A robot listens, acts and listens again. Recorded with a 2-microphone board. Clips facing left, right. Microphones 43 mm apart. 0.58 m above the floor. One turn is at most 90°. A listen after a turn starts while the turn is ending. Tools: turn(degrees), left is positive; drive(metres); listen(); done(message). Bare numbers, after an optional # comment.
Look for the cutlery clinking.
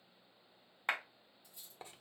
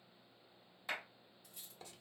turn(-90)
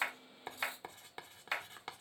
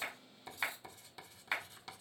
listen()
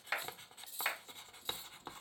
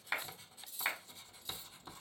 done("Facing the cutlery clinking.")